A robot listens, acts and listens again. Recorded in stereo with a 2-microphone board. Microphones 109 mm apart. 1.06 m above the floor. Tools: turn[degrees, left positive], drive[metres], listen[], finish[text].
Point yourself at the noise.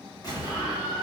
Thought: The explosion: about 35° left or 145° left.
Action: turn[35]
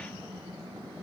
Action: listen[]
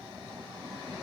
Action: finish[I heard an explosion, but can't make it out now. It was about straight ahead or 110° left.]